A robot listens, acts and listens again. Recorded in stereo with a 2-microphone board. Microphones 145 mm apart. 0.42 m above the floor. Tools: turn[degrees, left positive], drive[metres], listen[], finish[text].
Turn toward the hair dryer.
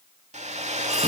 Thought: The hair dryer: about 50° right or 130° right.
Action: turn[-50]
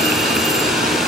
Action: listen[]
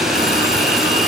Action: listen[]
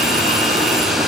Action: finish[I heard a hair dryer, but can't make it out now. It was about straight ahead or 80° right.]